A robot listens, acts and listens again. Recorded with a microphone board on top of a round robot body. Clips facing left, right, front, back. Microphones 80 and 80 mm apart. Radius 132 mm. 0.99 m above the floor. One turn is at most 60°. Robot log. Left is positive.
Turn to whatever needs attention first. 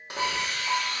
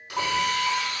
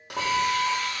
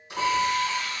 note: The alarm: 75° right.
cmd yaw -60
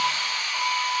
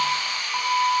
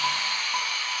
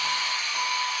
note: The alarm is now 15° right.
cmd yaw -15
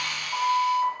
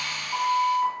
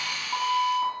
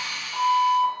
end: Facing the alarm.